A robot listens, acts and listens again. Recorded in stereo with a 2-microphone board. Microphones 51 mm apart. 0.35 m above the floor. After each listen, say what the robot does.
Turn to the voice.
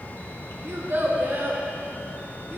Turn 50° right.
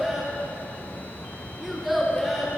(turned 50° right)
Facing the child speaking.